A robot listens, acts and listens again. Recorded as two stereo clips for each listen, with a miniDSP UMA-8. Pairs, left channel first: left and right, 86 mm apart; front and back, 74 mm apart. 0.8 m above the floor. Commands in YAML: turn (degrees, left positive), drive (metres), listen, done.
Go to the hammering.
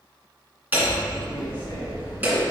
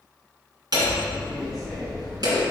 turn: -155
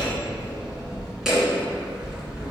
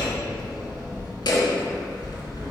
drive: 1.0
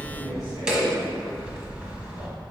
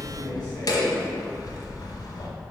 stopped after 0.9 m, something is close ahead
turn: -10
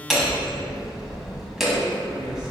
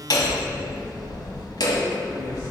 done: "I am next to the hammering."